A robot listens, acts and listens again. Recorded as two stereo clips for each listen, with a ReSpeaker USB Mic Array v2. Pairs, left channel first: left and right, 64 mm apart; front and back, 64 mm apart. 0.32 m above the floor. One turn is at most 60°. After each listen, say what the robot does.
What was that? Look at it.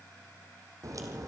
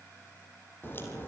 Turn 55° right.
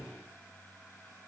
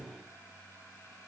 I heard a crack from this way, but can't make it out now.